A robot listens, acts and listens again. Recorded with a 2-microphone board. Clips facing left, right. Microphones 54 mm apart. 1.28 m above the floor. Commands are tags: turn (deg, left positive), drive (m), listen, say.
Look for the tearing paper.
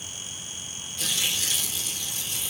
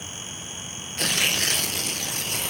<turn deg="-55"/>
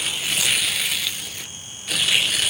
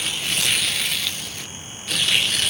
<say>Found it: tearing paper, straight ahead, under 1 m away.</say>